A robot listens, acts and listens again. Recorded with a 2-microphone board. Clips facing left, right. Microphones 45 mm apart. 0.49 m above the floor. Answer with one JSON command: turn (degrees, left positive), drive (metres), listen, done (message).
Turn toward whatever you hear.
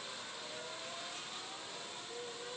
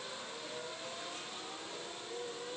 {"listen": true}
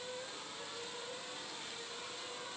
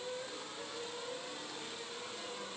{"listen": true}
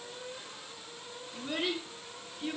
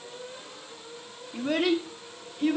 {"turn": -60}
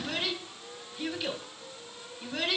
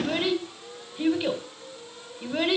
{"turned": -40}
{"turn": -20}
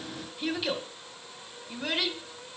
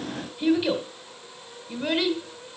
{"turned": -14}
{"done": "Found it: a child speaking, straight ahead."}